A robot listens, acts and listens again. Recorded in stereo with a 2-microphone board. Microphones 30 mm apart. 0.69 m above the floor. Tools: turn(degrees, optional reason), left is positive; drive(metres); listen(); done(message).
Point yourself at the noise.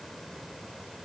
listen()
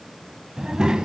turn(degrees=-25, reason="The child speaking: about 25° right or 155° right.")
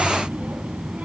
turn(degrees=-125, reason="So it is at 125° right.")
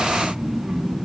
turn(degrees=-20, reason="The child speaking is now 20° right.")
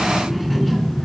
done("Facing the child speaking, over 4 m away.")